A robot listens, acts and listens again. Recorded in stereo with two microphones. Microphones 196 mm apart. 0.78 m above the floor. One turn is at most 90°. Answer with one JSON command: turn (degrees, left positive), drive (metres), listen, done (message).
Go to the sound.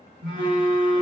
{"turn": -70}
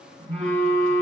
{"turn": -40}
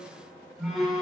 {"drive": 1.0}
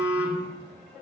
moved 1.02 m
{"turn": -10}
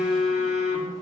{"drive": 1.0}
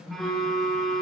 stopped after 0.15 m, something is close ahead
{"done": "I am next to the phone buzzing."}